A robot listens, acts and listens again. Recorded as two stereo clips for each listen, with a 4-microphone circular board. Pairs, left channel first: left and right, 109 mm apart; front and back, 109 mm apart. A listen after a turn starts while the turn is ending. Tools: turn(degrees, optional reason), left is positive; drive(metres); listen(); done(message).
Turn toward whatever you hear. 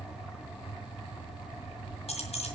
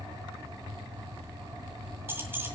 turn(degrees=110, reason="The keys jangling: 110° left.")
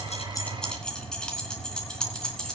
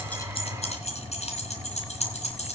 done("Facing the keys jangling.")